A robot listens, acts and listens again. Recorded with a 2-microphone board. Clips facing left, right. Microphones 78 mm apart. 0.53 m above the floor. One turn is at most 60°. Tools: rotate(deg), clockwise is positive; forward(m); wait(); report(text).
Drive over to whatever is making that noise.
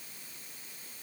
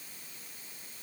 wait()
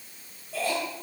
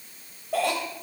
rotate(60)
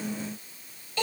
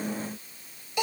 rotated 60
rotate(15)
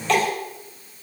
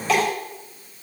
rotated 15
forward(1.0)
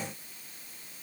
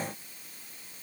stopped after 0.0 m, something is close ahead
wait()
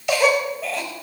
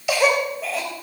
report("Blocked. The cough is further on, straight ahead.")